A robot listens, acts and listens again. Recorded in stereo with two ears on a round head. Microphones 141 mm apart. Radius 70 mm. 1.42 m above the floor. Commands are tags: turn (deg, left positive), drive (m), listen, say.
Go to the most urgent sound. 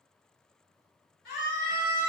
<turn deg="60"/>
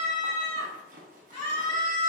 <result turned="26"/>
<turn deg="35"/>
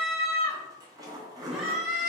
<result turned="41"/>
<drive m="1.0"/>
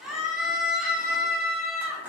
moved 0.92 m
<drive m="1.0"/>
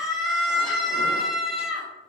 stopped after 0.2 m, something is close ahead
<say>I am next to the scream.</say>